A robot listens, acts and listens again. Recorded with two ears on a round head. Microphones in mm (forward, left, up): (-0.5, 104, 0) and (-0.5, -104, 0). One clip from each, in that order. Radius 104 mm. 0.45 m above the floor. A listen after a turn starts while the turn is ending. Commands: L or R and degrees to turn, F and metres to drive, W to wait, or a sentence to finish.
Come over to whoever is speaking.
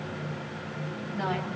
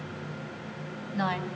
R55
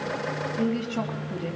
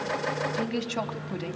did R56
R65
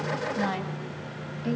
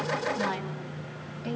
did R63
F1.0
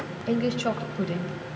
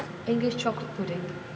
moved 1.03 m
F1.0
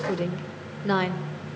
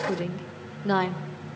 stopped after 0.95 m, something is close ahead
I am next to the woman speaking.